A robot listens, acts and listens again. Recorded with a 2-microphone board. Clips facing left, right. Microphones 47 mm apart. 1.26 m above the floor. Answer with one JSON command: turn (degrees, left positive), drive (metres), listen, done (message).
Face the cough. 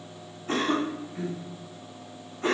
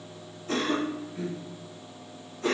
{"turn": 30}
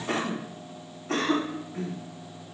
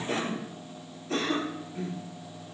{"turn": 115}
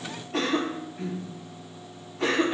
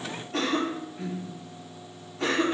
{"done": "Found it: a cough, straight ahead, 1 to 2 m away."}